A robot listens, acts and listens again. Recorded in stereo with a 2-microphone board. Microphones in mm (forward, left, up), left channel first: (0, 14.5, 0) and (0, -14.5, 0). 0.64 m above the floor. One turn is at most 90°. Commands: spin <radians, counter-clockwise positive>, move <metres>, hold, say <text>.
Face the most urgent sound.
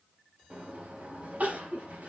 spin -1.57
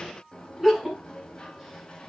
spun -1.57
spin -0.17
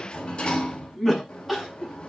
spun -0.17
say Found it: crying, straight ahead, over 4 m away.